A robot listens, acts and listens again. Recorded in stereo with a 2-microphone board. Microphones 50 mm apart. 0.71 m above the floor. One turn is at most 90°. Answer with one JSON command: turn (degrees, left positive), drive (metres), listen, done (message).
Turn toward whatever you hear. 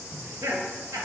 {"turn": -70}
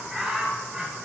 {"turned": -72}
{"done": "Facing the laughter."}